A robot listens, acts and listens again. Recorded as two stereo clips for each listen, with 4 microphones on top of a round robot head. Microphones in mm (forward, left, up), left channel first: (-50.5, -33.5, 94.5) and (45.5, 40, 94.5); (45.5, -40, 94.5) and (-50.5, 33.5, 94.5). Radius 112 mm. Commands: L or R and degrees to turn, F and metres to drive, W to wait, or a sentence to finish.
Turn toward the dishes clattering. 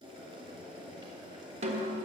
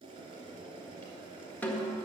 W
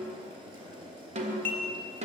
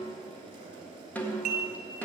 L140
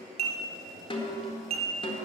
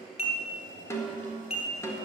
Found it: dishes clattering, straight ahead, 2 to 4 m away.